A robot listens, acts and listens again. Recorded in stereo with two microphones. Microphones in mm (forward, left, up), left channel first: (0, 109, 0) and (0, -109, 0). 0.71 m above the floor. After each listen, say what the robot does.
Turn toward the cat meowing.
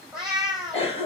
Turn 30° left.
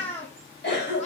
Turn 150° left.
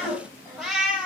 Facing the cat meowing.